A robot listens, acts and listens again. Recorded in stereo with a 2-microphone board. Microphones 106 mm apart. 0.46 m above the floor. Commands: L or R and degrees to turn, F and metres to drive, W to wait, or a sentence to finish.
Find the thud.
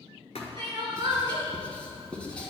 L90
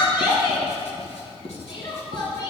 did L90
I heard a thud from this way, but can't make it out now.